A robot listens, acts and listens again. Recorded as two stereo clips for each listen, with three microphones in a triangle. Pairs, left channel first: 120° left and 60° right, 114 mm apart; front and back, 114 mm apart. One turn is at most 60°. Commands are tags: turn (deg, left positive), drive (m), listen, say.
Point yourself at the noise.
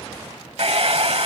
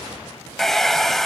<turn deg="-60"/>
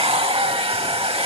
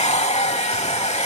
<turn deg="-25"/>
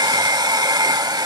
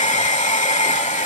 <say>Found it: a hair dryer, straight ahead, 1 to 2 m away.</say>